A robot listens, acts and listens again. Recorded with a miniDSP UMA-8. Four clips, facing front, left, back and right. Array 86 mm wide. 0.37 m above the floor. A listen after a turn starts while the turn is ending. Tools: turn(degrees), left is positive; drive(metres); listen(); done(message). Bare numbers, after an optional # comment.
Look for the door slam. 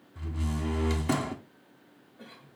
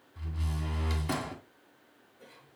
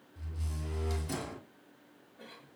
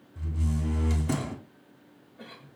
# The door slam: 15° left.
turn(15)
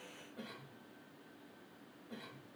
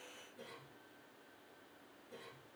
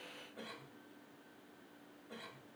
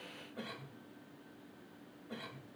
done("Facing where the door slam came from. I can't hear it now.")